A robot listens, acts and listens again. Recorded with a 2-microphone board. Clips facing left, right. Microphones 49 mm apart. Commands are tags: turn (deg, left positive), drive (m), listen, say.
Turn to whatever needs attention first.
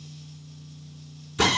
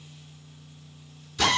<listen/>
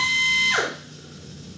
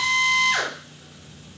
<listen/>
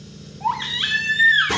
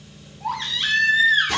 <turn deg="20"/>
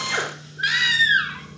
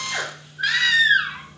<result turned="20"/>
<say>Facing the baby crying, 1 to 2 m away.</say>